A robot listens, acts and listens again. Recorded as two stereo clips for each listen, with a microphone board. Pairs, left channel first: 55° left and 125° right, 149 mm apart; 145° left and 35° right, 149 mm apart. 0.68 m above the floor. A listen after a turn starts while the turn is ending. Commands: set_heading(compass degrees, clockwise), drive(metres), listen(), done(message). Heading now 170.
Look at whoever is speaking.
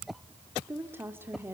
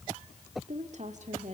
set_heading(225)
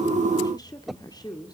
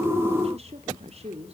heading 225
done("Found it: a woman speaking, straight ahead, 2 to 4 m away.")